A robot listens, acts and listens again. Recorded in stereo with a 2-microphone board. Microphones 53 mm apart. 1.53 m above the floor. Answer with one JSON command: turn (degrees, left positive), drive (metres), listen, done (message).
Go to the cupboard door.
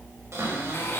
{"turn": -65}
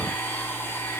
{"listen": true}
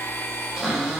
{"drive": 1.0}
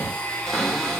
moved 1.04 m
{"drive": 1.0}
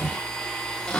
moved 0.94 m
{"turn": 20}
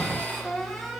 {"drive": 1.0}
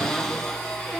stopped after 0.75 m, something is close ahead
{"turn": 10}
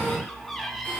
{"done": "Arrived at the cupboard door, straight ahead."}